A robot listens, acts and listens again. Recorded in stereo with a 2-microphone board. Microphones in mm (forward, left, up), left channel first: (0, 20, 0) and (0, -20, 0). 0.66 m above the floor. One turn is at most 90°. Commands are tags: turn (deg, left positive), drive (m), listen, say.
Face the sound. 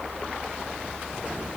<listen/>
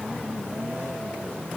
<listen/>
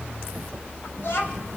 <turn deg="90"/>
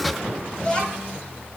<turn deg="30"/>
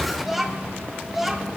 <say>Facing the child speaking.</say>